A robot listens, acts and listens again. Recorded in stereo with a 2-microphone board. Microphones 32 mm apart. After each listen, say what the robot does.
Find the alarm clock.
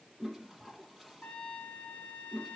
Keep listening.
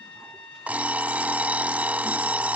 Turn 55° right.
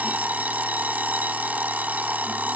Turn 65° right.
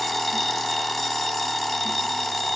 Facing the alarm clock.